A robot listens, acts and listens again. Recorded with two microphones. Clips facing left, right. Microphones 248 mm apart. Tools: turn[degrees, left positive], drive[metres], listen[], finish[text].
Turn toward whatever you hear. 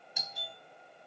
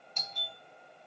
Action: turn[30]
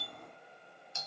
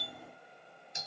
Thought: So it is at 20° right.
Action: turn[-20]
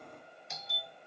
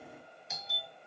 Action: finish[Found it: a doorbell, straight ahead, 1 to 2 m away.]